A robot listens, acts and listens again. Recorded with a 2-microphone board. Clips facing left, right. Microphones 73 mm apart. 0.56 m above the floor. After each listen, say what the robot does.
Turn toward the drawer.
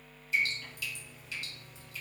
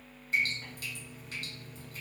Keep listening.
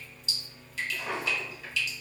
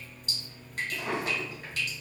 Turn 55° right.
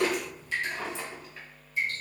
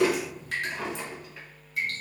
Facing the drawer.